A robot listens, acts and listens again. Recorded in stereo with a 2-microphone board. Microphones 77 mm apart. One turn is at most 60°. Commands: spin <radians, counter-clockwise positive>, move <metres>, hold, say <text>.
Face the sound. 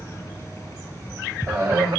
spin -0.52
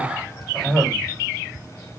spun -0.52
say Found it: a cough, straight ahead, 2 to 4 m away.